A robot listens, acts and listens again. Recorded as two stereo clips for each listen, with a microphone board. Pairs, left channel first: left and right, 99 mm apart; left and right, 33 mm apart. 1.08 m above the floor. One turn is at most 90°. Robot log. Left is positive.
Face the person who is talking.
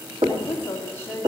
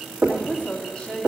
note: The woman speaking: about 20° left or 160° left.
cmd yaw +20
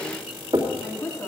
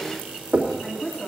note: The woman speaking: about 25° left or 155° left.
cmd yaw +25
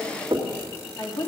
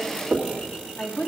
note: The woman speaking: about 35° left or 145° left.
cmd yaw +35
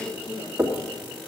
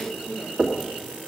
note: So it is at 120° left.
cmd yaw +90
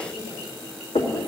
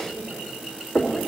note: Nothing new. It was at 30° left.
cmd yaw +30
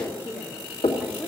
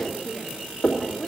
note: The woman speaking is now 25° left.
cmd yaw +25
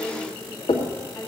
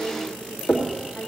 end: Found it: a woman speaking, straight ahead.